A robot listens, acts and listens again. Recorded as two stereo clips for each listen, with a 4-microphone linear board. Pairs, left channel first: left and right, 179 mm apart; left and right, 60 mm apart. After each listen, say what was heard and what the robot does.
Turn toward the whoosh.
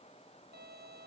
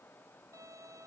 Keep listening.
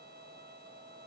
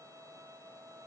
Keep listening.
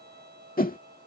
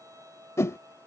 The whoosh: about 55° left or 125° left. Turn 55° left.
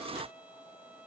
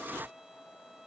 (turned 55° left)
Keep listening.
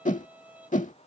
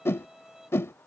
So it is at 55° left. Turn 55° left.
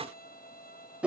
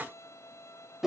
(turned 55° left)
The whoosh is now 10° right. Turn 10° right.
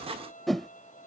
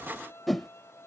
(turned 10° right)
Found it: a whoosh, straight ahead.